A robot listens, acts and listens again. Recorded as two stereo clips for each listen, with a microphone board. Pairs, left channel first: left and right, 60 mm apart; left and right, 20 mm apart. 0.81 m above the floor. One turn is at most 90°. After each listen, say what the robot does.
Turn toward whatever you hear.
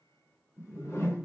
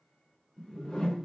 Turn 45° left.
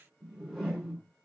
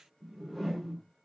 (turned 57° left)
Turn 10° right.
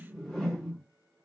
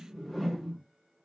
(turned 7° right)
Found it: a whoosh, straight ahead.